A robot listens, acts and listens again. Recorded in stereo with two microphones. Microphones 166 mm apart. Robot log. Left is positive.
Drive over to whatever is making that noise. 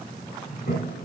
cmd yaw +90
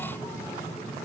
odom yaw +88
cmd idle
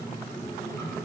note: The toilet flushing is now 15° left.
cmd yaw +15
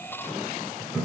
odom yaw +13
cmd fwd 1.0
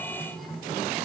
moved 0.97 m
cmd fwd 1.0
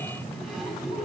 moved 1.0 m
cmd fwd 1.0
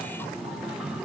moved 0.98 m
cmd idle
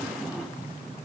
cmd idle
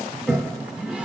cmd fwd 1.0
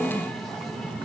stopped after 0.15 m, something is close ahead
end: I am next to the toilet flushing.